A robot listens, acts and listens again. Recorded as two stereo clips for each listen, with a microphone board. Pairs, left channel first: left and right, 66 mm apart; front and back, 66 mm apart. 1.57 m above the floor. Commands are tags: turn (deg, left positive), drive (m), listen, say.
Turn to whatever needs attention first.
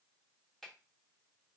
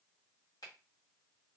<listen/>
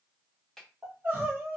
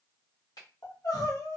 <turn deg="-25"/>
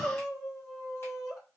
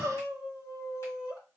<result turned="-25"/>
<say>Found it: crying, straight ahead.</say>